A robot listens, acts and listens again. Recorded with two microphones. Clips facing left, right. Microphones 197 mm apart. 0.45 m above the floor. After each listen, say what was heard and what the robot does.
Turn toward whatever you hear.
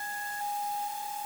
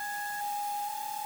Keep listening.
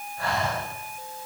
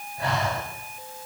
The breathing: about 20° right or 160° right. Turn 20° right.
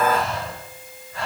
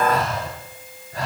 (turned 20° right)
So it is at 140° right. Turn 140° right.
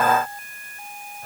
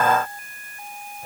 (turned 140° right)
The breathing is now 15° right. Turn 15° right.
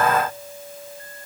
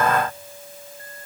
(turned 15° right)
Keep listening.
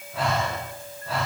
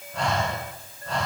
Facing the breathing.